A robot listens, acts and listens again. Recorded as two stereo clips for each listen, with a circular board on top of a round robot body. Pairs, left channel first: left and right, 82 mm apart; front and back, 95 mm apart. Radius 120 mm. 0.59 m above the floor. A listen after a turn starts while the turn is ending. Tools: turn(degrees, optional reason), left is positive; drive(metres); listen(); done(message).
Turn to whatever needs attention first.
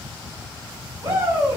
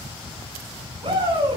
turn(degrees=-145, reason="The shout: 145° right.")
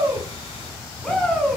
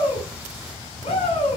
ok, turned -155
turn(degrees=10, reason="The shout is now 10° left.")
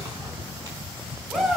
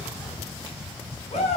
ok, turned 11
done("Facing the shout.")